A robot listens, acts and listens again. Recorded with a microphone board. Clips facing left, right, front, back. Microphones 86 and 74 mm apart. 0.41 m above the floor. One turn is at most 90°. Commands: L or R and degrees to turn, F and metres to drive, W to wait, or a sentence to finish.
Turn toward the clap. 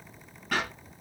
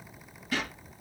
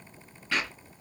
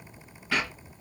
L90
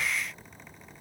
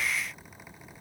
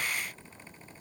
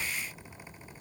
L20
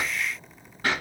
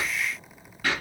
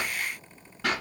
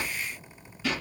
L25
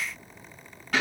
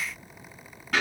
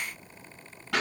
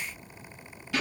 Found it: a clap, straight ahead, 2 to 4 m away.